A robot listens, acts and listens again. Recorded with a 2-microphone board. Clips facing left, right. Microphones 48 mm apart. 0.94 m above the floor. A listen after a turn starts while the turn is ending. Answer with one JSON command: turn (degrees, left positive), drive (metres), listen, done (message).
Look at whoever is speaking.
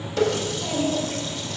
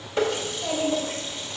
{"turn": -35}
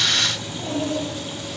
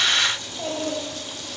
{"turn": -110}
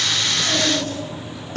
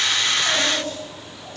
{"done": "Facing the child speaking, 2 to 4 m away."}